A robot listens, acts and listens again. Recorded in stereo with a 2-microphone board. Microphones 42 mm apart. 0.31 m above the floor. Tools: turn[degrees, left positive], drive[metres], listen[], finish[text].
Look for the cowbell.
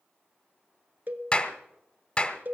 Thought: The cowbell: about 45° right or 135° right.
Action: turn[-45]
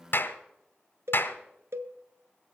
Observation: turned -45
Thought: So it is at 90° right.
Action: turn[-90]
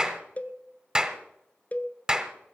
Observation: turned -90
Thought: The cowbell is now 35° left.
Action: turn[35]
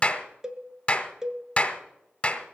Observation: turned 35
Thought: The cowbell is now 15° right.
Action: turn[-15]
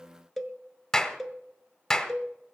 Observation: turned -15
Action: finish[Found it: a cowbell, straight ahead.]